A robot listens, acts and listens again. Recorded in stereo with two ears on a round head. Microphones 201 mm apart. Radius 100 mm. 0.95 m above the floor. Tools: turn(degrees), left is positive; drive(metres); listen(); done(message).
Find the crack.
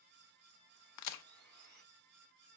turn(degrees=90)
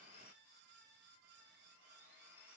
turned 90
done("Facing where the crack came from. I can't hear it now.")